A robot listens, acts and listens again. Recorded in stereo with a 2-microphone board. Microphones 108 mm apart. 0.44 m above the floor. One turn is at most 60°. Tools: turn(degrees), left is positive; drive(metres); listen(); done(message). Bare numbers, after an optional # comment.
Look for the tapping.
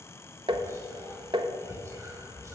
# The tapping: about 50° right or 130° right.
turn(-50)
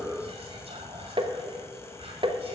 # So it is at 70° right.
turn(-60)
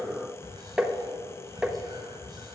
# The tapping is now 10° right.
turn(-10)
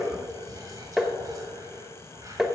done("Facing the tapping, under 1 m away.")